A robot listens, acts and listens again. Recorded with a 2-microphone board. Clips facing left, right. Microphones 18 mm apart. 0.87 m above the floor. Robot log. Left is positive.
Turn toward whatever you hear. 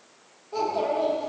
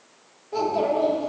cmd yaw +30
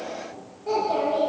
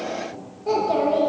cmd yaw -30
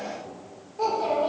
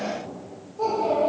note: So it is at 35° left.
cmd yaw +35
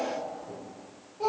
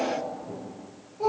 note: The child speaking is now 15° left.
cmd yaw +15
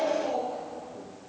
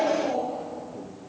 end: Found it: a child speaking, straight ahead, 2 to 4 m away.